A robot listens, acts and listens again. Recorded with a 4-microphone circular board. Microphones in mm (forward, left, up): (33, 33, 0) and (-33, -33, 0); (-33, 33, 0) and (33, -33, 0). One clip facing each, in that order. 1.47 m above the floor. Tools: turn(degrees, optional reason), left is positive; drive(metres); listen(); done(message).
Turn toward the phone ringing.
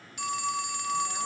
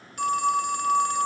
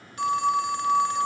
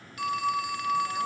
turn(degrees=-170, reason="The phone ringing: 170° right.")
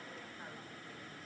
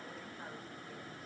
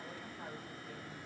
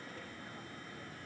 listen()
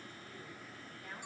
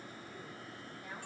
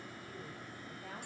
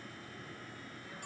listen()
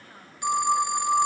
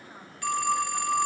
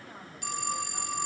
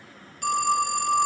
turn(degrees=-25, reason="The phone ringing is now 25° right.")
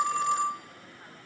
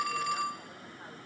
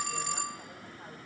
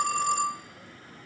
turn(degrees=-10, reason="The phone ringing is now 10° right.")
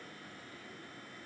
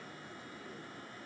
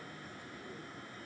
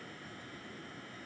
listen()
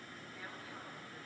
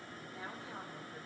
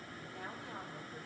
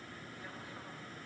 listen()
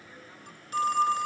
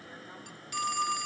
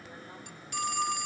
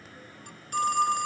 done("Found it: a phone ringing, straight ahead.")